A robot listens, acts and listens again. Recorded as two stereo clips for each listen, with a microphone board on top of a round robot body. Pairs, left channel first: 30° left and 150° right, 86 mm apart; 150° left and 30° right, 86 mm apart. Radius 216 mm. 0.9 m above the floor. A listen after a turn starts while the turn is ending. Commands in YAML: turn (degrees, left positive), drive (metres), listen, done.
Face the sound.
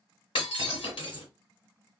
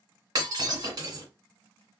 turn: 20
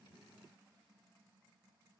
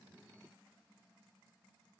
done: "I heard breaking glass from this way, but can't make it out now."